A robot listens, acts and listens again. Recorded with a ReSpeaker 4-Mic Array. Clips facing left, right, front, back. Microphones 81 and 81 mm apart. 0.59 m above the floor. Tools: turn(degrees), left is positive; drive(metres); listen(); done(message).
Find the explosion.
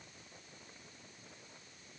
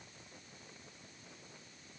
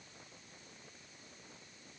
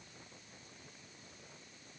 listen()
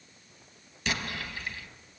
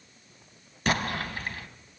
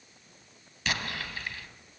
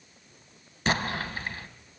turn(degrees=-130)
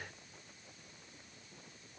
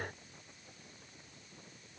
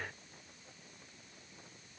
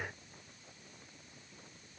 done("I heard an explosion from this way, but can't make it out now.")